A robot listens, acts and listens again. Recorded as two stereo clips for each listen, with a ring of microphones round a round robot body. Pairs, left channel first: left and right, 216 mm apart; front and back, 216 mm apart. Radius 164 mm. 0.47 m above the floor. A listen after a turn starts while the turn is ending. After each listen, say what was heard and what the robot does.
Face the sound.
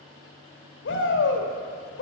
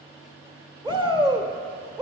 The shout: 115° left. Turn 115° left.
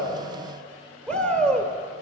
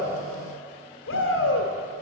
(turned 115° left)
Found it: a shout, straight ahead.